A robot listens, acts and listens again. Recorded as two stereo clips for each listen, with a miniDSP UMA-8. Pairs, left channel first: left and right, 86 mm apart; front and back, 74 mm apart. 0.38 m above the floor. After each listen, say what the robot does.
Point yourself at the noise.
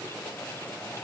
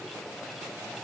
Keep listening.
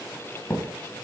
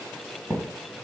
Turn 155° left.
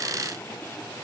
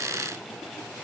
I heard a thud from this way, but can't make it out now.